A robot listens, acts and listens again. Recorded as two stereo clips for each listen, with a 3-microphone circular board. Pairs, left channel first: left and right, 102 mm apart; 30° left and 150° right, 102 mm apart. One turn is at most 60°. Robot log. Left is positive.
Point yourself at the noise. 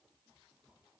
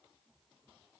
cmd idle
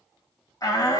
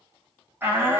note: The shout: 140° left.
cmd yaw +60
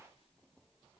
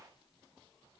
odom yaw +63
note: Nothing new. It was at 80° left.
cmd yaw +60
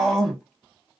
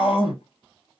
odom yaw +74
end: Found it: a shout, straight ahead.